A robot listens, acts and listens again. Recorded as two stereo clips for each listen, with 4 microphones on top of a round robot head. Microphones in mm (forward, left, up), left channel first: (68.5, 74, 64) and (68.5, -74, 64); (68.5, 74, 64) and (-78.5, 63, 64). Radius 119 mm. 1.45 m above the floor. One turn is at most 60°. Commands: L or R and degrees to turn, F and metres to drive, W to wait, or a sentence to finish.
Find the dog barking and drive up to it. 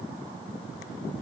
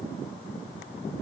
W
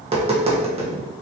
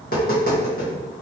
W
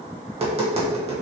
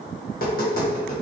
I can't make out a dog barking, only tapping.